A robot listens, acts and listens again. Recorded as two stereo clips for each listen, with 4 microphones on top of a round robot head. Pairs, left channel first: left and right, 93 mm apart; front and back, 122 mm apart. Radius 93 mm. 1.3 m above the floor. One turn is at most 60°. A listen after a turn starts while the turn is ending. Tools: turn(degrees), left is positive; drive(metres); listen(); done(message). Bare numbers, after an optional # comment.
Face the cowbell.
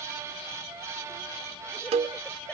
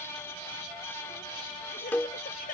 # The cowbell: 80° right.
turn(-60)
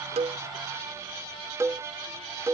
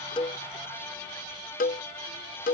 # The cowbell is now 20° right.
turn(-20)
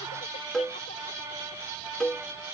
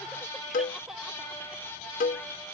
done("Found it: a cowbell, straight ahead.")